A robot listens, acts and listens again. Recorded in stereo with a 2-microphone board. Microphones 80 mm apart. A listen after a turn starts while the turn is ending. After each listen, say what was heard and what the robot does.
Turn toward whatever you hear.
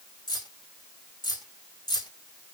The keys jangling: about 70° left or 110° left. Turn 70° left.
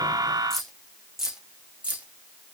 So it is at 20° right. Turn 20° right.
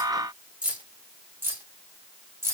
The keys jangling is now 35° right. Turn 35° right.
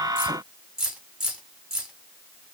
The keys jangling is now 10° right. Turn 10° right.
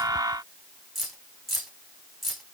Found it: keys jangling, straight ahead.